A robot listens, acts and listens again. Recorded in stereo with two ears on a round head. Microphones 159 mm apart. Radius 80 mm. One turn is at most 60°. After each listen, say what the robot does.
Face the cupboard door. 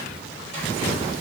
Keep listening.
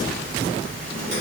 Keep listening.
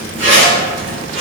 I can't make out a cupboard door, only a zipper.